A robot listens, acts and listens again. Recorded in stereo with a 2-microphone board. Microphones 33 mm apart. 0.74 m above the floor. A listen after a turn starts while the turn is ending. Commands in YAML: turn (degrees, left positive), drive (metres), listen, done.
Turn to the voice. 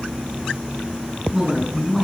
turn: -15
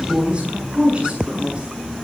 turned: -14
turn: -150
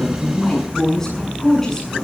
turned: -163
turn: 15
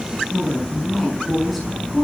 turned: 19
done: "Facing the woman speaking."